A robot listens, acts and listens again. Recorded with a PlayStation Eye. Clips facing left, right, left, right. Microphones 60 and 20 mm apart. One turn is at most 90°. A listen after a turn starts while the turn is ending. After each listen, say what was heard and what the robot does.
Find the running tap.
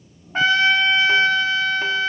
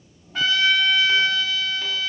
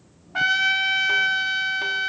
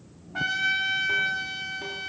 Keep listening.
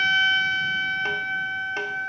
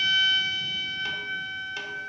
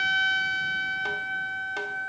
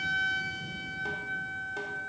Keep listening.
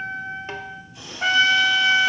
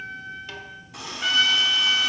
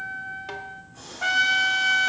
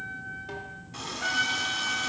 Turn 90° right.
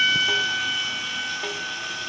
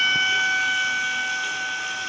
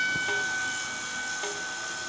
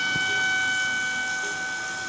Keep listening.
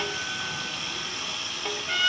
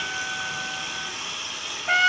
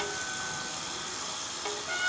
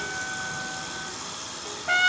Facing the running tap.